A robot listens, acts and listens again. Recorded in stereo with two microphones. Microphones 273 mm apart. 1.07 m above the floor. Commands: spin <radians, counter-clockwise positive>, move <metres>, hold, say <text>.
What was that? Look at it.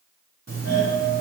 spin -1.05
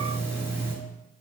spin -0.17
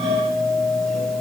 say Facing the doorbell.